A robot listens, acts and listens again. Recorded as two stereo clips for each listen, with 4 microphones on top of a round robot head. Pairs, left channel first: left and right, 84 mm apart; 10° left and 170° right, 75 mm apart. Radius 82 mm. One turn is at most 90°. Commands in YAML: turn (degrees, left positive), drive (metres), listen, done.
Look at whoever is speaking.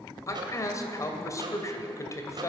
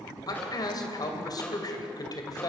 turn: 40
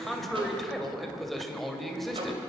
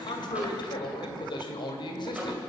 done: "Found it: a man speaking, straight ahead, 2 to 4 m away."